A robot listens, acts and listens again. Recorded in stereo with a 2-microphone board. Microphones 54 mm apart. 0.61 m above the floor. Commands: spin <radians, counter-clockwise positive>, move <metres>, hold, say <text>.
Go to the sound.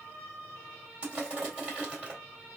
spin -0.44
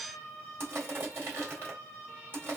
spin -2.27
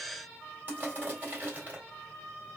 spin -0.61
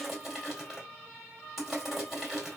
move 1.0
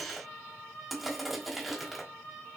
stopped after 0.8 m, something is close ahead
say Arrived at the crushing, straight ahead.